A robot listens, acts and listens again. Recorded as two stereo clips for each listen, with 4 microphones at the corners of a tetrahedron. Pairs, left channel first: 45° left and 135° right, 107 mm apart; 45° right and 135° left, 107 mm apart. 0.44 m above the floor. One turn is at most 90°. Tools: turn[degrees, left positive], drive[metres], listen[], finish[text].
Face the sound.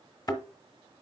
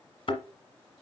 Action: finish[Found it: a thud, straight ahead.]